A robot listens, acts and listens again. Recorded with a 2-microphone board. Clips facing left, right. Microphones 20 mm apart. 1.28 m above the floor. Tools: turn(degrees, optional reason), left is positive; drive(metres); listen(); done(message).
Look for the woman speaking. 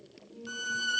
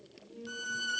turn(degrees=-35, reason="The woman speaking: about 35° right or 145° right.")
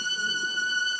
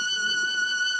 listen()
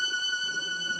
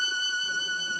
listen()
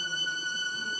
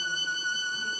done("I heard a woman speaking, but can't make it out now. It was about straight ahead or 110° right.")